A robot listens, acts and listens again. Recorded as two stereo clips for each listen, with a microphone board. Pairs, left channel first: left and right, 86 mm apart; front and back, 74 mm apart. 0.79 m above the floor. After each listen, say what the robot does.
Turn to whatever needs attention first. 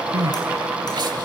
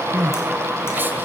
Turn 120° right.
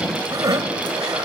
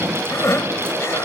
Turn 50° right.
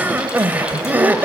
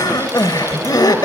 Turn 20° right.
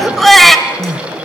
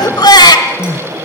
Facing the crying, 1 to 2 m away.